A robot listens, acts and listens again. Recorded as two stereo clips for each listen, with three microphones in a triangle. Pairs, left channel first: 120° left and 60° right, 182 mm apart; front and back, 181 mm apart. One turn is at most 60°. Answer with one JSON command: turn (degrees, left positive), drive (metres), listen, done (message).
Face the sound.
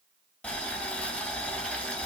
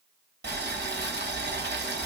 {"turn": -60}
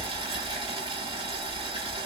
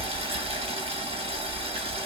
{"turn": -60}
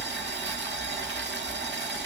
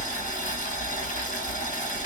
{"turn": -45}
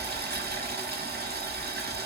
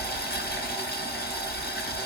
{"turn": -30}
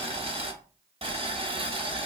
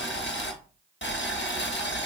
{"done": "Facing the boiling, under 1 m away."}